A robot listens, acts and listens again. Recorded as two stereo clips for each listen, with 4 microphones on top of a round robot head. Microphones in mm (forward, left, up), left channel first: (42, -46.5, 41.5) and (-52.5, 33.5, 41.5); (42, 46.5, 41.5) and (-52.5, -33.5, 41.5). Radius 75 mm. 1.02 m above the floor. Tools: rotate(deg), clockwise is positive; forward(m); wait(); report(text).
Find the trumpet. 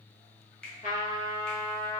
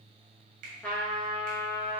rotate(40)
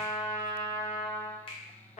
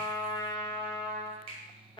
rotate(10)
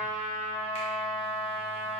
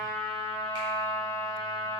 report("Found it: a trumpet, straight ahead.")